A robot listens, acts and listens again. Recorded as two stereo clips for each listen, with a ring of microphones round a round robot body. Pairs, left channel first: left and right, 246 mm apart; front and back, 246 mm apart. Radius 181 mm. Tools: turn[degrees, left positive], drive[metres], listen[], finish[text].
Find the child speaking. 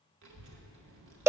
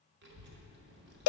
Thought: The child speaking: 130° right.
Action: turn[-130]
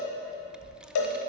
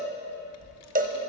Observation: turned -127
Action: finish[Found it: a child speaking, straight ahead.]